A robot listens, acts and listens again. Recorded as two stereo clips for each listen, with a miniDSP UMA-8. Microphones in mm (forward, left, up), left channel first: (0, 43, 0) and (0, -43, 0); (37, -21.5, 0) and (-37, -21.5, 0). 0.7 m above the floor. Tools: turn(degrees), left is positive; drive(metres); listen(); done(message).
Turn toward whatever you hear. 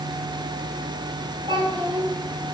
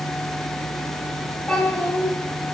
turn(degrees=-85)
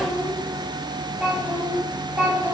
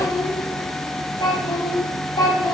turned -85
turn(degrees=-25)
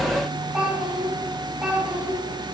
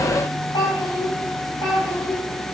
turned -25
turn(degrees=-15)
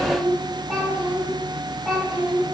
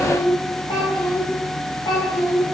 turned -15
done("Found it: a child speaking, straight ahead, over 4 m away.")